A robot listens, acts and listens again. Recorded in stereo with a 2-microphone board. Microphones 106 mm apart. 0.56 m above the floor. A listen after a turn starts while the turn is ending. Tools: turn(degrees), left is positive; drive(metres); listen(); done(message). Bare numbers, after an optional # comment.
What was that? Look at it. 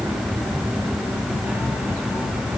listen()
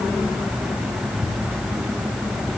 listen()
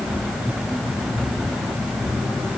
done("I can't make out anything to turn to.")